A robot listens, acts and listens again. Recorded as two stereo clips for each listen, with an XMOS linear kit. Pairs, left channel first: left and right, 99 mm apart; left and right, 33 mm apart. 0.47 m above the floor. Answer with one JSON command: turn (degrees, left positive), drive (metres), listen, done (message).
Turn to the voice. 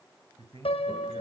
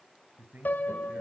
{"turn": -70}
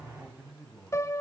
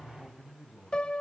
{"done": "Facing the man speaking."}